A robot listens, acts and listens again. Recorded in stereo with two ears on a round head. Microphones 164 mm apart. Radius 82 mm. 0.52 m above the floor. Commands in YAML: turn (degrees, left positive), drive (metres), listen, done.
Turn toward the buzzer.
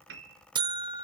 turn: -25
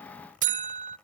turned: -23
turn: -130
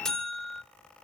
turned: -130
done: "Facing the buzzer."